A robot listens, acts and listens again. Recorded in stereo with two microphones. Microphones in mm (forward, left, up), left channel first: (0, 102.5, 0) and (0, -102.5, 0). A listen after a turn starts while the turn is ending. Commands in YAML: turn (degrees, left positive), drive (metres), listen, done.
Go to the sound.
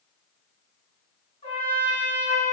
turn: 30
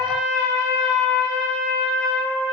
drive: 1.0
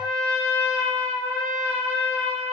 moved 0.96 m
drive: 1.0
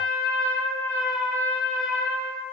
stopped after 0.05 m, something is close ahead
done: "I am next to the trumpet."